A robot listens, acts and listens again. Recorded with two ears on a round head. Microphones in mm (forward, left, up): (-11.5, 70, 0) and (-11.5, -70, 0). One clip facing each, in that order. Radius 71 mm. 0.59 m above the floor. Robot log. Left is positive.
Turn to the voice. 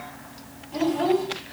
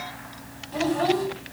cmd yaw -30
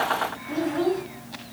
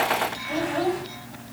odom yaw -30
note: So it is at 145° right.
cmd yaw -145
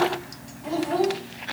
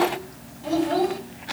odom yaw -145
note: The child speaking is now 30° right.
cmd yaw -30
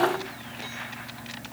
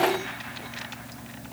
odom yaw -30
cmd idle
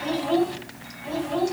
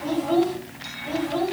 end: Facing the child speaking.